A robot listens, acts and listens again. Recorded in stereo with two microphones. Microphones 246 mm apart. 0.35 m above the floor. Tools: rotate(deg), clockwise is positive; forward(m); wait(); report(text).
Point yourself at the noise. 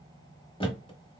rotate(-20)
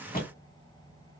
rotate(-140)
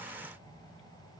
report("I heard a thud from this way, but can't make it out now.")